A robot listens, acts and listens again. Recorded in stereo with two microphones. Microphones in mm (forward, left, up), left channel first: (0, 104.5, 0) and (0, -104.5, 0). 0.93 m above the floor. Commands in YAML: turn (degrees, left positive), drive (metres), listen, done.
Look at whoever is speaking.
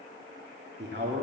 turn: -55
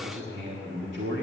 turn: -65
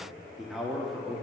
done: "Found it: a man speaking, straight ahead."